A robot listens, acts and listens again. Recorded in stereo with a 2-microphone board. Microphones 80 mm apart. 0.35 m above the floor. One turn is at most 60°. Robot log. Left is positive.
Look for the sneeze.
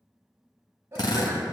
note: The sneeze: about 35° right or 145° right.
cmd yaw -35
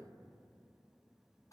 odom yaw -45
cmd idle
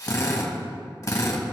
end: I heard a sneeze, but can't make it out now. It was about 10° left or 100° right.